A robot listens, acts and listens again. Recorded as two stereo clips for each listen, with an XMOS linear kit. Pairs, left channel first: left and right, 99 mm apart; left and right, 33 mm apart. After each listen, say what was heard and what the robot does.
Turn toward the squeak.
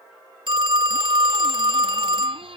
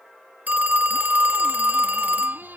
The squeak: about 65° right or 115° right. Turn 65° right.
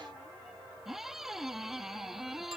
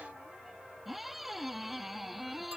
Found it: a squeak, straight ahead.